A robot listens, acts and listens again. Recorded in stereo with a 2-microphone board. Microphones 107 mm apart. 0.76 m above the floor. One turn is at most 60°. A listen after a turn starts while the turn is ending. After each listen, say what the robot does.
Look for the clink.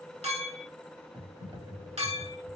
Turn 60° right.
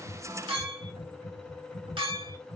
Turn 50° right.
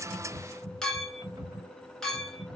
Found it: a clink, straight ahead.